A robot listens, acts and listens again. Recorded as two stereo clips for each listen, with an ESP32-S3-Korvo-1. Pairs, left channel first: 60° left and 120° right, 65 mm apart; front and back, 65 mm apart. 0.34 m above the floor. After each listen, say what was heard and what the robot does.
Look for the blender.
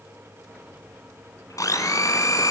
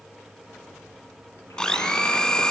The blender: 80° left. Turn 80° left.
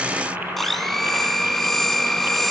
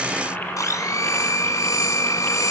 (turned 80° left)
The blender is now 25° right. Turn 25° right.
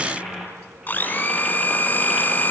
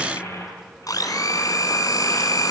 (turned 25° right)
Found it: a blender, straight ahead, 1 to 2 m away.